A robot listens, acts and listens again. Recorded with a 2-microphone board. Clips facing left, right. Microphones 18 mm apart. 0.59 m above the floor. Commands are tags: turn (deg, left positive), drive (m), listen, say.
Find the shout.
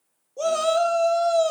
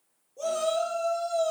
<turn deg="40"/>
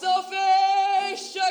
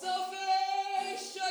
<turn deg="90"/>
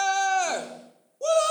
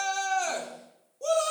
<turn deg="30"/>
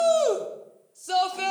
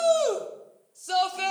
<say>Facing the shout.</say>